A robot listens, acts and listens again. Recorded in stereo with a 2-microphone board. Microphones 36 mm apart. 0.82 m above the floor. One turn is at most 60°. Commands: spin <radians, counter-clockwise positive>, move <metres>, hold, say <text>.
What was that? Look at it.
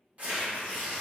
spin -0.61
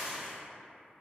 spin -0.17
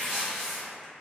say Found it: tearing paper, straight ahead.